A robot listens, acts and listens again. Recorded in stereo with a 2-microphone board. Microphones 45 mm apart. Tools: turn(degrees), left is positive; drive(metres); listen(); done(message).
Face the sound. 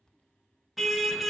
turn(degrees=30)
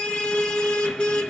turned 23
turn(degrees=155)
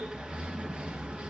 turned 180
turn(degrees=-25)
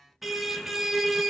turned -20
done("Found it: a car horn, straight ahead, 2 to 4 m away.")